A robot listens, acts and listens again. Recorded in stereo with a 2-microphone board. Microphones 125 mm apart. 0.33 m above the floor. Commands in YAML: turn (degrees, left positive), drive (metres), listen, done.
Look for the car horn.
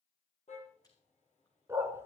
turn: 70
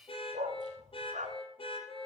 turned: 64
turn: 45
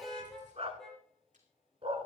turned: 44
done: "Facing the car horn."